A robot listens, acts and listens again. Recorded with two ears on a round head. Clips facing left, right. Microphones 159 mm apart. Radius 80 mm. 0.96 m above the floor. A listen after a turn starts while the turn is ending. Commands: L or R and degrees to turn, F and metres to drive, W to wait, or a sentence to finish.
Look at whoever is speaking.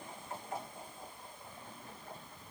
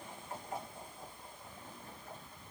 W
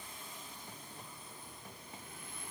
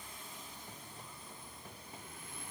W
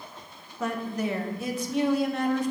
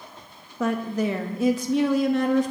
R60
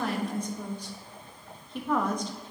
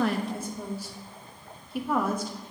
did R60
Facing the woman speaking.